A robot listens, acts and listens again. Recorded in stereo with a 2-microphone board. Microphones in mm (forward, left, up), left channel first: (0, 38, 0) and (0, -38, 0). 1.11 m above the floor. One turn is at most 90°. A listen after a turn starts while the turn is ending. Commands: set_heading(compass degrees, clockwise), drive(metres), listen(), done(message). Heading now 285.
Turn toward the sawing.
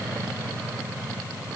listen()
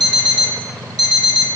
listen()
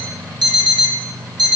done("I can't make out sawing, only an alarm clock.")